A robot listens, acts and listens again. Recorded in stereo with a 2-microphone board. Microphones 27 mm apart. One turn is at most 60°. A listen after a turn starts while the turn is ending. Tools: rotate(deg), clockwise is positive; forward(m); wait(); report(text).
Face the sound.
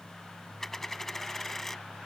rotate(-30)
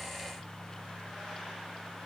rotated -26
wait()
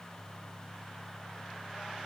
report("I heard a dropped coin, but can't make it out now. It was about 15° right or 140° left.")